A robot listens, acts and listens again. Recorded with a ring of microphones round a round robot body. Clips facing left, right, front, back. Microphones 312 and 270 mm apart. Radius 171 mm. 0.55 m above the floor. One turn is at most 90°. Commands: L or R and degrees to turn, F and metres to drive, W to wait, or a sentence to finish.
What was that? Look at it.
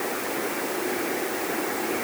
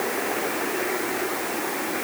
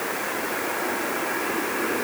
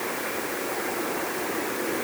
W
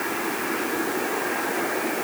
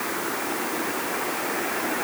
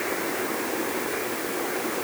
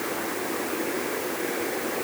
W
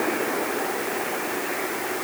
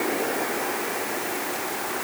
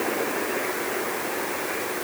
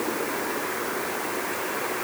I can't make out anything.